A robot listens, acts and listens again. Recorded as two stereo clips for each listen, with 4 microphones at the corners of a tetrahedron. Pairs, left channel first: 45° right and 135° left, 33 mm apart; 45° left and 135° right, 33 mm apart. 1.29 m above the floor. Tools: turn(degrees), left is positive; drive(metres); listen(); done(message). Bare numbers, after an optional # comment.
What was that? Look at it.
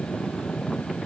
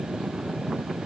listen()
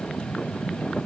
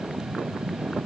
listen()
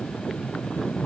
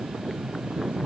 done("I can't make out anything.")